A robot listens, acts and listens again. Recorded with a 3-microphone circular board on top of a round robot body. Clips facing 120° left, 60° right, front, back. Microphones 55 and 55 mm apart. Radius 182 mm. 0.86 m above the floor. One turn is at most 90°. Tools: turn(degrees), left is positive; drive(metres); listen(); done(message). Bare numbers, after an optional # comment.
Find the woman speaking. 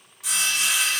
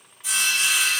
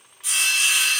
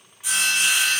listen()
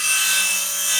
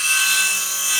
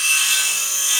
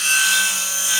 listen()
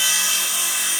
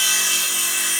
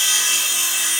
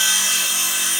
done("I can't make out a woman speaking to turn to.")